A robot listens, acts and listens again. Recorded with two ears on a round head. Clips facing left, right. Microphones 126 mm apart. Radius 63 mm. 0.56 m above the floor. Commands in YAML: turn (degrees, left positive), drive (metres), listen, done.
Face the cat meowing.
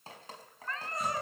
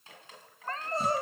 turn: -30
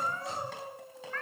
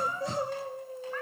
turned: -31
turn: -10
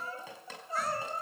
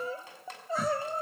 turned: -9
listen: true
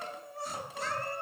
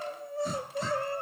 listen: true
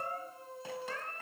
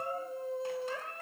turn: -10
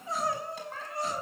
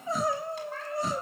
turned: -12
listen: true
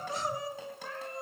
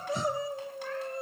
listen: true
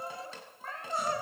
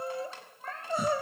done: "Found it: a cat meowing, straight ahead, over 4 m away."